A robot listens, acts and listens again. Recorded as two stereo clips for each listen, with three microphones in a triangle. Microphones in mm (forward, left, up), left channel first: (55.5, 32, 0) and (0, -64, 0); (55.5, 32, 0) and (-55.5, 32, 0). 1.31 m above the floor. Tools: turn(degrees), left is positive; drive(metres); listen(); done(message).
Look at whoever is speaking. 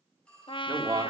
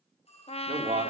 turn(degrees=-170)
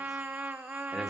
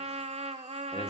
listen()
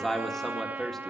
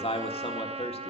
turn(degrees=-25)
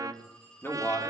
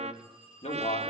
turn(degrees=-10)
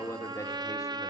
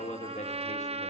done("Found it: a man speaking, straight ahead.")